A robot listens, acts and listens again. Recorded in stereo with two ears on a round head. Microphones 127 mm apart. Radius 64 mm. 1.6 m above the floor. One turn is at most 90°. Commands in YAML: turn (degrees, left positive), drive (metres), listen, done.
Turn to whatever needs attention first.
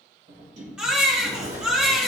turn: -30
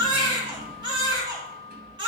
turn: -90
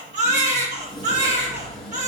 turn: -55
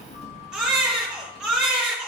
done: "Found it: a baby crying, straight ahead."